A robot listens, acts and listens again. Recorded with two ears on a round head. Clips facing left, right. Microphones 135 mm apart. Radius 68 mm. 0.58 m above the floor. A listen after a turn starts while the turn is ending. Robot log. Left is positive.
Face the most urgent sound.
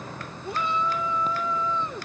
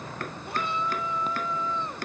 cmd yaw +90
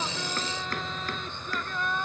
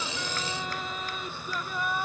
note: So it is at 10° right.
cmd yaw -10
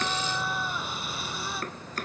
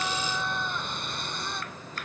end: Found it: a shout, straight ahead.